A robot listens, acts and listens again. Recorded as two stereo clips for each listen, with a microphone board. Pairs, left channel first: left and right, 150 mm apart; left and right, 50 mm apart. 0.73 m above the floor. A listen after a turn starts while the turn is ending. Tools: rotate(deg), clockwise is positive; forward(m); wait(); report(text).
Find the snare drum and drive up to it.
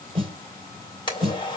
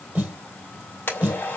rotate(35)
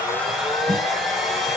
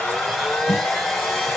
wait()
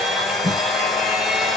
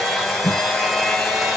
forward(1.0)
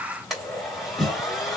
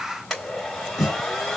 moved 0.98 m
forward(1.0)
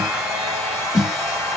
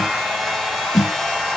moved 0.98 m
forward(1.0)
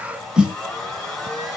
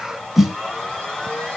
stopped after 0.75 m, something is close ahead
report("Arrived at the snare drum, straight ahead.")